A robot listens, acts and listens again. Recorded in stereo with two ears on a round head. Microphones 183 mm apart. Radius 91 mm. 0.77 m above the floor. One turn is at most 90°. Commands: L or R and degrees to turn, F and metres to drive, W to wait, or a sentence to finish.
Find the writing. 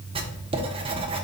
R30
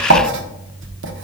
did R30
R90
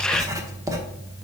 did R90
R15
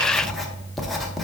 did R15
Facing the writing.